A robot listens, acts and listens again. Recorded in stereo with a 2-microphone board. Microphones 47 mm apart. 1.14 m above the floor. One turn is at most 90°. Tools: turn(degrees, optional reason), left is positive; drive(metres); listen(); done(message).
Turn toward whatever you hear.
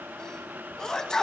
turn(degrees=30)
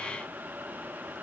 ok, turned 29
listen()
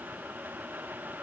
done("I heard a sneeze, but can't make it out now. It was about 15° right or 135° left.")